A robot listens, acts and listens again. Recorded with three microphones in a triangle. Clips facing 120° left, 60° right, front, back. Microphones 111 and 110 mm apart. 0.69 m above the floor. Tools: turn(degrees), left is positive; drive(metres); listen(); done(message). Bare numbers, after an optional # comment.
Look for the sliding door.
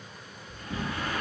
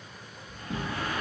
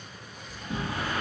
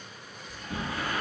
# The sliding door: 55° right.
turn(-55)
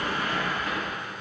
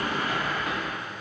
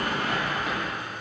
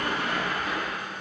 # The sliding door is now 30° right.
turn(-30)
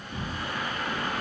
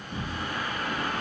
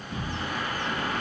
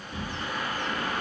done("Facing the sliding door, 1 to 2 m away.")